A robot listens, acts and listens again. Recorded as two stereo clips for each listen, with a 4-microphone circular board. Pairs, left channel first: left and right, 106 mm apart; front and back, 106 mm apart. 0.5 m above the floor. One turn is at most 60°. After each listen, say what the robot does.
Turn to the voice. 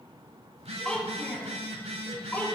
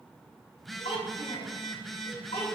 Turn 15° left.
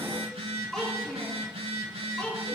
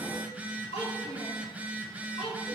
Turn 10° left.
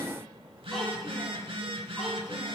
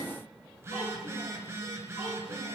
Keep listening.
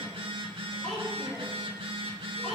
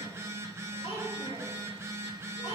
Found it: a child speaking, straight ahead.